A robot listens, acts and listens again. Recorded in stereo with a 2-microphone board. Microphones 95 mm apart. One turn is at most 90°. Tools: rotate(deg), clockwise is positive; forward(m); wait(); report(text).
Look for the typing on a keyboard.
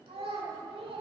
wait()
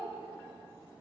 wait()
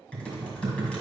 rotate(-30)
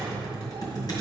rotate(-90)
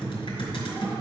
rotate(-65)
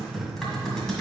report("Found it: typing on a keyboard, straight ahead.")